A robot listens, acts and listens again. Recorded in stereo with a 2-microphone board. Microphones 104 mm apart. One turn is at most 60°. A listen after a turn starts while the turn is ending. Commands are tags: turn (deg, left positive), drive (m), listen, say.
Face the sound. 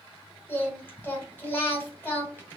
<turn deg="20"/>
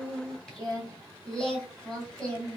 <say>Facing the singing.</say>